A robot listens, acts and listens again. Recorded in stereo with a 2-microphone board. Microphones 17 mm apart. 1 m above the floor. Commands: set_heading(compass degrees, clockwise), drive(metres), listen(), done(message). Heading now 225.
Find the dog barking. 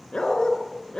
set_heading(135)
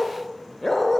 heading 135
set_heading(120)
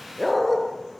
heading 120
done("Facing the dog barking.")